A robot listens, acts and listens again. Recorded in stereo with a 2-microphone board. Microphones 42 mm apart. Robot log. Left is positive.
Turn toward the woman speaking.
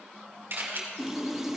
cmd idle
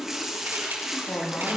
note: The woman speaking: about 75° left or 105° left.
cmd yaw +75
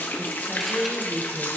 end: Facing the woman speaking.